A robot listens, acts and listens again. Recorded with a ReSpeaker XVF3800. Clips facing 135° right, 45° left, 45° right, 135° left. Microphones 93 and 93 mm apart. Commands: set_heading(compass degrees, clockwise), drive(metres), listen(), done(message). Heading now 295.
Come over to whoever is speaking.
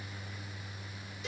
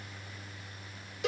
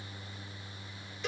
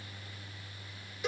listen()
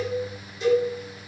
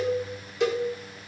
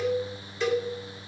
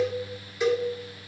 listen()
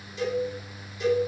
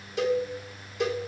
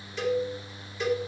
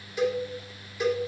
done("I can't make out anyone speaking to turn to.")